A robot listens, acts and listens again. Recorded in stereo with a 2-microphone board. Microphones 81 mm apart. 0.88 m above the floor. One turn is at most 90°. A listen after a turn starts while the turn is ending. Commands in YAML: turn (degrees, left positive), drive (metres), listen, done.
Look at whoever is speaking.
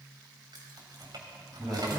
turn: -30
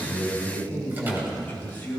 turn: 25
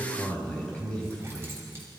turn: 15
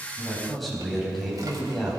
done: "Facing the man speaking."